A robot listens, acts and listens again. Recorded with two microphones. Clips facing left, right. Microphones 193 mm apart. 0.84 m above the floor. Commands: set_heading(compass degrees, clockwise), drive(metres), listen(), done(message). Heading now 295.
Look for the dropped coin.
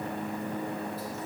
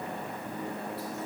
listen()
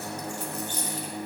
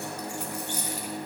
set_heading(325)
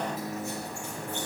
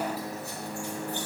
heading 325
listen()
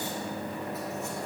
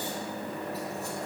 done("I heard a dropped coin, but can't make it out now. It was about 20° left or 140° right.")